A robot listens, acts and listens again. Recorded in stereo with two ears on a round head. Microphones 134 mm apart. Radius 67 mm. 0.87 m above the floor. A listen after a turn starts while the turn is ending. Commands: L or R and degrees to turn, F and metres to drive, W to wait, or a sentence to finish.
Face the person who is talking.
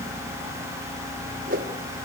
W
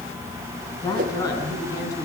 L25
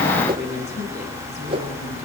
W
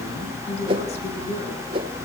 L135
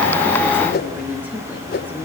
W
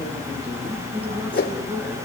R10
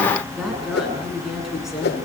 Found it: a woman speaking, straight ahead, over 4 m away.